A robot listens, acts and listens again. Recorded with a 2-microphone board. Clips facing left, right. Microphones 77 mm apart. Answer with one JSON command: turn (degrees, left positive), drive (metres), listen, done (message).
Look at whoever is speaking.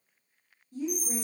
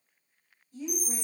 {"turn": 50}
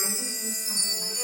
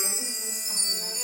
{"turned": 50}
{"listen": true}
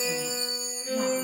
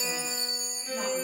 {"listen": true}
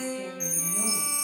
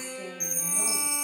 {"done": "I heard a woman speaking, but can't make it out now. It was about straight ahead or 80° left."}